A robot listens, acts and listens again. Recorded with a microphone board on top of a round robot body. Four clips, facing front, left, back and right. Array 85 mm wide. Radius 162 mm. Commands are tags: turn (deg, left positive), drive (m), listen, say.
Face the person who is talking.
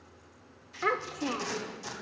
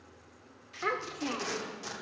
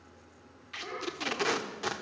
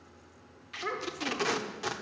<turn deg="20"/>
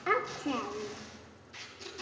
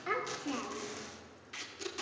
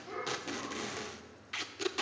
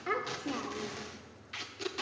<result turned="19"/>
<say>Facing the child speaking.</say>